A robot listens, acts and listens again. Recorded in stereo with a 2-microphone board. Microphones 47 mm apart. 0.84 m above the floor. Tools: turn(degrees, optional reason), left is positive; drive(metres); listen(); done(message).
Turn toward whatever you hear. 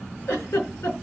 turn(degrees=70, reason="The giggle: about 70° left or 110° left.")
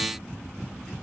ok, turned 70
listen()
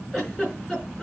done("Found it: a giggle, straight ahead.")